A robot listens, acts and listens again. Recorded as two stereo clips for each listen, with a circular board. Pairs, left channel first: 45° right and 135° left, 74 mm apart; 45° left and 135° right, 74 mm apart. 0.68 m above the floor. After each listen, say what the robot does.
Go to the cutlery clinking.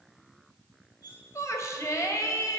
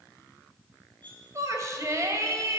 Turn 30° right.
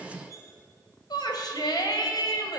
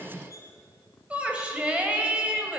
Drive 1.0 m forward.
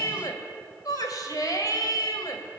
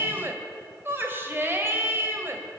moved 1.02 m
Keep listening.
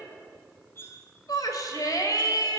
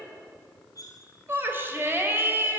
Turn 10° left.
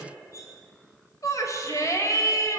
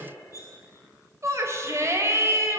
Drive 1.0 m forward.
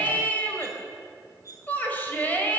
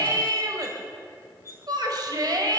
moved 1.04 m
Drive 1.0 m forward.
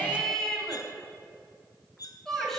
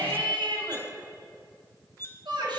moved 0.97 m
Turn 15° right.
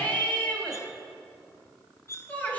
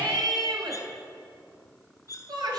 Drive 1.0 m forward.
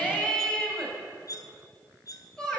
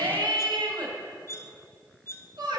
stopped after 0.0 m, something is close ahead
Turn 10° right.
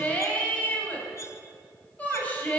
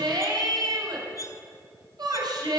Arrived at the cutlery clinking, straight ahead.